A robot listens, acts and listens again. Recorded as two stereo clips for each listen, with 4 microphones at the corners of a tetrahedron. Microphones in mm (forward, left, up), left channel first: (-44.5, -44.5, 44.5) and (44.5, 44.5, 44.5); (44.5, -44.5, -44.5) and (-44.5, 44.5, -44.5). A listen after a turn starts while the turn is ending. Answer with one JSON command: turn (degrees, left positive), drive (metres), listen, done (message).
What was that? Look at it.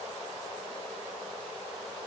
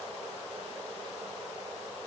{"listen": true}
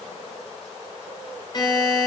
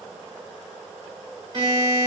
{"turn": 180}
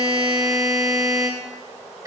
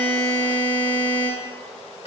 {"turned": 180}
{"turn": -10}
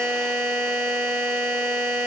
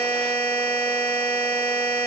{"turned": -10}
{"done": "Found it: a buzzer, straight ahead."}